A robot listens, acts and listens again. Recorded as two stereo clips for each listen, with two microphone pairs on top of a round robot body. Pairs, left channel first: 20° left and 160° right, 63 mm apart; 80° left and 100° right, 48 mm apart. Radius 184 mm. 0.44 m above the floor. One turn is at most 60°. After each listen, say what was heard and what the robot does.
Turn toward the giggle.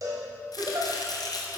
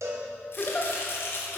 The giggle: 155° left. Turn 60° left.
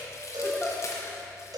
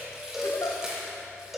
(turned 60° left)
The giggle is now 95° left. Turn 60° left.
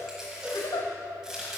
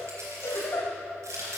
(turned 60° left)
The giggle is now 40° left. Turn 40° left.
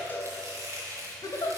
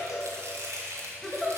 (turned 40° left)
Found it: a giggle, straight ahead.